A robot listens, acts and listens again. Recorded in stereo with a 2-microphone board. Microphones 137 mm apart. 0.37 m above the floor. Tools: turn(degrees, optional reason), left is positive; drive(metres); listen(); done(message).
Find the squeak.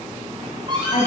turn(degrees=-35, reason="The squeak: about 35° right or 145° right.")
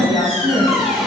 done("Facing the squeak.")